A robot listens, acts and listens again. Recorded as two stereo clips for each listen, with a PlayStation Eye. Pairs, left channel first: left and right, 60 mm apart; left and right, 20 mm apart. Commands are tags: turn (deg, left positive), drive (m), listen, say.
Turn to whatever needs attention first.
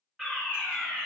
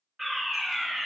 <turn deg="30"/>
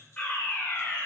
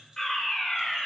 <turn deg="150"/>
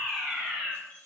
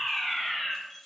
<say>Facing the fire alarm.</say>